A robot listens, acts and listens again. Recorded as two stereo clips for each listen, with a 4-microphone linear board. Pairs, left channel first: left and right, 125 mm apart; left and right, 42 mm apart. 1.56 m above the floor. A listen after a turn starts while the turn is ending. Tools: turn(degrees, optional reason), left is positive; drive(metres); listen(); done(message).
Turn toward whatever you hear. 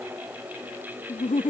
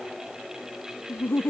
turn(degrees=90)
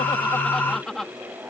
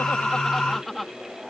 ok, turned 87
done("Facing the laughter.")